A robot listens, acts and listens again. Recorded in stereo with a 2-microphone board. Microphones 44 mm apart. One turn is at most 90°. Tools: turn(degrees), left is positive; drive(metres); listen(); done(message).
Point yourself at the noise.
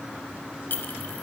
turn(degrees=55)
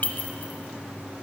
turn(degrees=50)
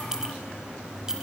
turn(degrees=-15)
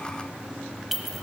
done("Facing the clink.")